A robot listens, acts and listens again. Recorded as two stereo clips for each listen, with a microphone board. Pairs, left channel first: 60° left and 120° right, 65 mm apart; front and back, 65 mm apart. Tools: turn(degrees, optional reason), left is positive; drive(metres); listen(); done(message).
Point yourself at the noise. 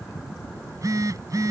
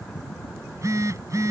turn(degrees=-145, reason="The phone buzzing: 145° right.")
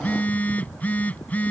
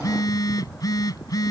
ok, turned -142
done("Facing the phone buzzing.")